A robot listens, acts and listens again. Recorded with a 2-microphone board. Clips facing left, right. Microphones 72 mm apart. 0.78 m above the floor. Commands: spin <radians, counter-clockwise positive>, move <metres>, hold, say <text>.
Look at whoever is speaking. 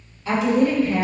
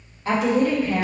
spin -0.70
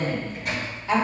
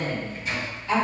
spin 0.35
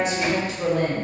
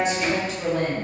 spin 0.17
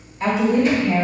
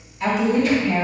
spin 0.17
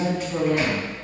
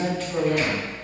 say Found it: a woman speaking, straight ahead.